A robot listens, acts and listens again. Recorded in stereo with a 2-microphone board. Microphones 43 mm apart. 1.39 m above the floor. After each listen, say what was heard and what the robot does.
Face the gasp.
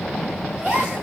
The gasp: about 25° right or 155° right. Turn 25° right.
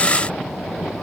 Keep listening.
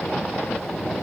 I heard a gasp, but can't make it out now. It was about straight ahead or 130° right.